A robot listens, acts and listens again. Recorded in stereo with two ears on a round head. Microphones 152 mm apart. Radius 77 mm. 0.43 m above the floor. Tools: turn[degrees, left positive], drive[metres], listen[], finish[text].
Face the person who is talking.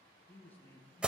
Action: turn[30]
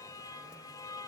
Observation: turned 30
Action: listen[]
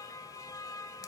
Action: listen[]
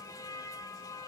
Action: finish[I heard a man speaking, but can't make it out now. It was about 20° right or 140° left.]